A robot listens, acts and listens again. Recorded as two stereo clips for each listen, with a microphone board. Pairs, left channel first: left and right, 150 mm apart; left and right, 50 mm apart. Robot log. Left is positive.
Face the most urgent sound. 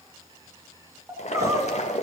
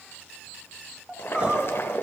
note: The crying: about 20° right or 160° right.
cmd yaw -20
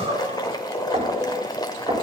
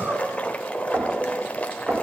note: So it is at 135° right.
cmd yaw -135
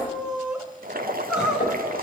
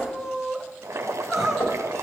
end: Facing the crying, 1 to 2 m away.